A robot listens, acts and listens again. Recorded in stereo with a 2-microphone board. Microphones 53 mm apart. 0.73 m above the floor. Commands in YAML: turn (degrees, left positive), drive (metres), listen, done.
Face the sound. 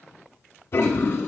turn: 55
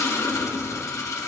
turn: 70
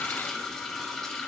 done: "Facing the toilet flushing, under 1 m away."